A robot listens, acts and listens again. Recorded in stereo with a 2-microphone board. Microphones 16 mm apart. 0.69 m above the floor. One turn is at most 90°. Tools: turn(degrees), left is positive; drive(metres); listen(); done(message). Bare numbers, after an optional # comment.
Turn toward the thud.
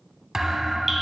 # The thud: about 20° right or 160° right.
turn(-20)
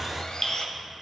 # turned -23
listen()
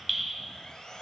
done("I heard a thud, but can't make it out now. It was about straight ahead or 135° right.")